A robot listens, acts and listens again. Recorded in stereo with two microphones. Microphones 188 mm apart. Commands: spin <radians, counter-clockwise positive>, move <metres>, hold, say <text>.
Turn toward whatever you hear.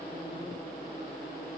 hold
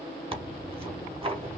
spin -0.52
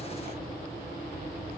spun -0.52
hold
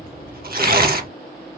spin -2.09
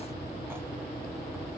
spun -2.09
hold
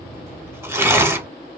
spin -0.26
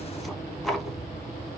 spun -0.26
say Facing the tearing paper.